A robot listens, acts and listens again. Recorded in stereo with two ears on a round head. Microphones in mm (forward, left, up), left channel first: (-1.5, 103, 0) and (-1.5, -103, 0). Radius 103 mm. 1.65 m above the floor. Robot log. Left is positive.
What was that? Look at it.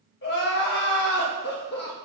note: The crying: about 50° left or 130° left.
cmd yaw +50
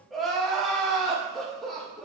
end: Found it: crying, straight ahead, 1 to 2 m away.